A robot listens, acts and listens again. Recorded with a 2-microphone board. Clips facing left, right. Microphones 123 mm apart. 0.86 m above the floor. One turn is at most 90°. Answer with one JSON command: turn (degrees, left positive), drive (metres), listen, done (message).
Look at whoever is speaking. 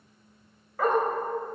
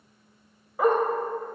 {"listen": true}
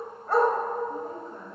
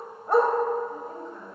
{"turn": 45}
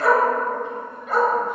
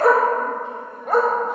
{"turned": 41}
{"listen": true}
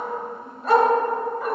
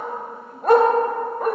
{"listen": true}
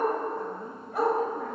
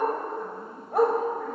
{"done": "I heard a woman speaking, but can't make it out now. It was about 5° left or 90° left."}